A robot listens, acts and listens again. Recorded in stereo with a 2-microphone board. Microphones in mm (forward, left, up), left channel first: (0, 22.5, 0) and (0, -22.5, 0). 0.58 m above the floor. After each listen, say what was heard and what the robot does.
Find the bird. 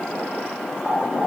The bird: about 15° right or 165° right. Turn 15° right.
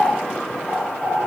So it is at 145° right. Turn 145° right.
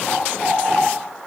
Facing the bird, 2 to 4 m away.